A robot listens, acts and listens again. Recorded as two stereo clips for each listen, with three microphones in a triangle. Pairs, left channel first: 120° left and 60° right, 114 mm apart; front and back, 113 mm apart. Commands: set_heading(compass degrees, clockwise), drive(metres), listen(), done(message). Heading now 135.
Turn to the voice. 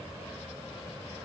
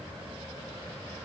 listen()
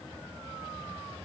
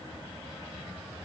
listen()
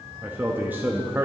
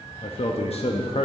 set_heading(125)
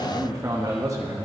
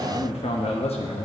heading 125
done("Facing the man speaking.")